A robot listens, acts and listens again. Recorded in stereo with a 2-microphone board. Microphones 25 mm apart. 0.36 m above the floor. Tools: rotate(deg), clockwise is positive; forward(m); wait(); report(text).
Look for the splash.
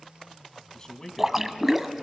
rotate(30)
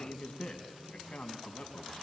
wait()
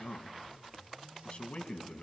report("I heard a splash, but can't make it out now. It was about 20° left or 140° right.")